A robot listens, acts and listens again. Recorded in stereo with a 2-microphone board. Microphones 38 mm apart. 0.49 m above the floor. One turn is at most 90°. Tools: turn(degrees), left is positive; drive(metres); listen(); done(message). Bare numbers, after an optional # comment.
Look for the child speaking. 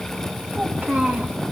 # The child speaking: about 45° right or 135° right.
turn(-45)
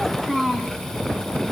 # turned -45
done("Facing the child speaking.")